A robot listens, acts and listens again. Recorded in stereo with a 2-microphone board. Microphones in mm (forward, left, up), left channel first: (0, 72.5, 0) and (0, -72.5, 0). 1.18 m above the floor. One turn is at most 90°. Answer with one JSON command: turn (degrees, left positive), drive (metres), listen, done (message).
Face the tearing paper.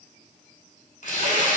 {"turn": 65}
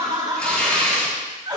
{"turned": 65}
{"turn": 10}
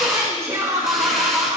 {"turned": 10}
{"listen": true}
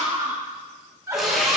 {"done": "Facing the tearing paper, 2 to 4 m away."}